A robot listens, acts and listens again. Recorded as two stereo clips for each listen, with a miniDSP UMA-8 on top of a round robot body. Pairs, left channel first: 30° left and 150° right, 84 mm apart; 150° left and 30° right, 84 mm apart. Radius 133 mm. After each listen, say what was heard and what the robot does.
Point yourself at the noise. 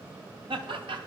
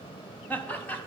The laughter: 140° right. Turn 140° right.
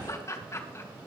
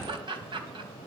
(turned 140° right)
The laughter is now 25° right. Turn 25° right.
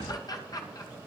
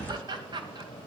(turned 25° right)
The laughter is now 10° right. Turn 10° right.
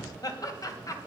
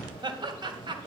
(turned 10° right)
The laughter is now 15° right. Turn 15° right.
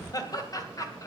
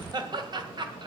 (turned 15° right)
The laughter is now 15° right. Turn 15° right.
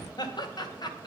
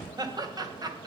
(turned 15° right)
Facing the laughter.